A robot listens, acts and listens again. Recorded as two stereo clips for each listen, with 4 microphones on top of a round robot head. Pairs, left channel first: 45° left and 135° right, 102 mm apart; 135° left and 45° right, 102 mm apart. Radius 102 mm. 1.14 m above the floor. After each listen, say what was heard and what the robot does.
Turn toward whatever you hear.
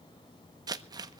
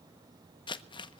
The crumpling: 175° left. Turn 175° left.
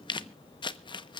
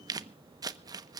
Facing the crumpling, under 1 m away.